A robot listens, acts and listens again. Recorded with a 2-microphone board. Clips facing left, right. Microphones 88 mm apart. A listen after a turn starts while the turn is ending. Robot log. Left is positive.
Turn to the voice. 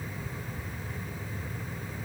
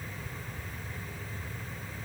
cmd idle
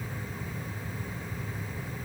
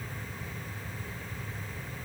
cmd idle
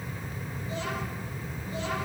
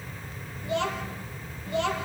note: The child speaking: about 65° right or 115° right.
cmd yaw -65
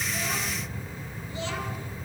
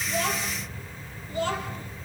note: So it is at 50° right.
cmd yaw -50
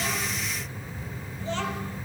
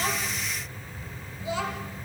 note: The child speaking is now 10° right.
cmd yaw -10
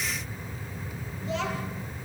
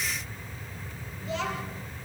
end: Facing the child speaking.